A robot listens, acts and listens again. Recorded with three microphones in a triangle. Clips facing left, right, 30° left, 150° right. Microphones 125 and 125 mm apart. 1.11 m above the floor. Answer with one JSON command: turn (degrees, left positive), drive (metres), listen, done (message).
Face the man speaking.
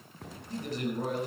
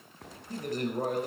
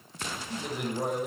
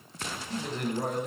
{"turn": -50}
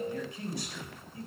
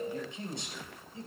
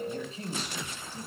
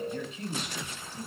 {"turn": -25}
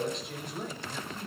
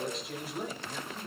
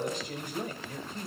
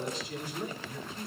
{"done": "Found it: a man speaking, straight ahead, over 4 m away."}